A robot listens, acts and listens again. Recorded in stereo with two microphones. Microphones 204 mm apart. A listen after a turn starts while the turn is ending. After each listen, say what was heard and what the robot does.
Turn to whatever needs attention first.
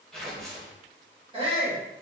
The shout: about 25° right or 155° right. Turn 25° right.
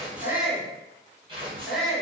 Facing the shout.